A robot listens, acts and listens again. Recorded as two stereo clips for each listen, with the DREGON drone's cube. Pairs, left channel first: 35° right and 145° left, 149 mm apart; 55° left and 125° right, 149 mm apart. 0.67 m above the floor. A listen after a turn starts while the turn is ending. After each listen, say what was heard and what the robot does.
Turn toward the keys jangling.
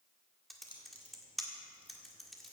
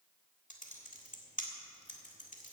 The keys jangling: 85° right. Turn 85° right.
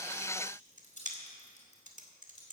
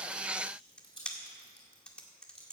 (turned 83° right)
Facing the keys jangling.